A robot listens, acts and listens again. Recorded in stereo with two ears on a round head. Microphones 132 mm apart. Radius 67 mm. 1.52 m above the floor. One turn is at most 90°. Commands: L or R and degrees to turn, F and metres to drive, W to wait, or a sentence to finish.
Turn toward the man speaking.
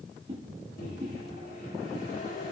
W
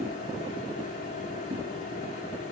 W
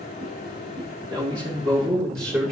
R25
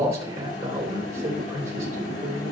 R90
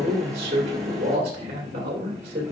R40
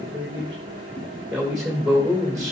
Found it: a man speaking, straight ahead, 2 to 4 m away.